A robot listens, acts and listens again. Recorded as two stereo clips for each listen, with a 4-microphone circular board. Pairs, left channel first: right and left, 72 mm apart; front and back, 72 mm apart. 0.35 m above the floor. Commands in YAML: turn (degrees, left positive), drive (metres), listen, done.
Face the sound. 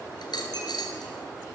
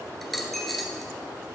turn: -85
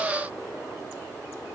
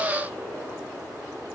done: "Facing where the dropped coin came from. I can't hear it now."